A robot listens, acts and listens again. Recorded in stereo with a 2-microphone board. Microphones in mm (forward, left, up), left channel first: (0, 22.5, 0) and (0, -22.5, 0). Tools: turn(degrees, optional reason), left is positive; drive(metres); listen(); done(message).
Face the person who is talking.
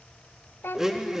turn(degrees=50, reason="The child speaking: about 50° left or 130° left.")
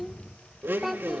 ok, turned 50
done("Facing the child speaking, under 1 m away.")